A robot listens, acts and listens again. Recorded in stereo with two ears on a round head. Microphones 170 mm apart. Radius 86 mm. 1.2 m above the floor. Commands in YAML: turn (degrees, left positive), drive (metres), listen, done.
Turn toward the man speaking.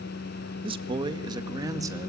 turn: -20
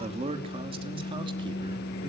turn: -30
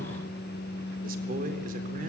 listen: true
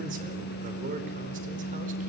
turn: -135
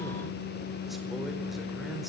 listen: true
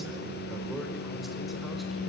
listen: true
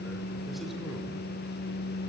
done: "Facing where the man speaking came from. I can't hear it now."